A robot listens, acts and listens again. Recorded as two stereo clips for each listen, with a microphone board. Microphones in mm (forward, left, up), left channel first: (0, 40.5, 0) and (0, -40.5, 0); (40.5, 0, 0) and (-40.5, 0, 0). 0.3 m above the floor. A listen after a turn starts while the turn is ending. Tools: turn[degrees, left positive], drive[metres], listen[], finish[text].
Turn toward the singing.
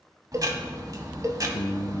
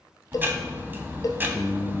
Thought: The singing: 95° left.
Action: turn[95]
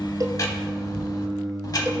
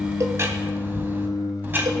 Thought: The singing is now 55° right.
Action: turn[-55]
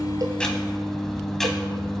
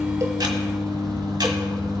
Thought: The singing is now 20° right.
Action: turn[-20]
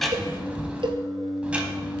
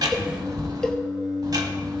Action: finish[Found it: singing, straight ahead.]